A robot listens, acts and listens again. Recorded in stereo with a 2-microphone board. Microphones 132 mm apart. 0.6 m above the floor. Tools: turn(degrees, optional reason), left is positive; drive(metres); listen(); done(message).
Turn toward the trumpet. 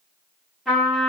turn(degrees=30)
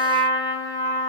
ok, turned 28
turn(degrees=150, reason="So it is at 150° left.")
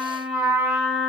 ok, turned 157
done("Found it: a trumpet, straight ahead, under 1 m away.")